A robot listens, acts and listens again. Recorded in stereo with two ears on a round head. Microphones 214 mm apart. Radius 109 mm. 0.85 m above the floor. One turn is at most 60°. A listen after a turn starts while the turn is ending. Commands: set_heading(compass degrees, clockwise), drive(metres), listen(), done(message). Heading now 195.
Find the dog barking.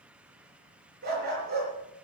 set_heading(240)
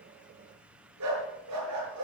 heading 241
set_heading(301)
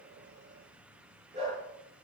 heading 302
set_heading(327)
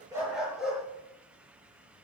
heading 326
done("Facing the dog barking, over 4 m away.")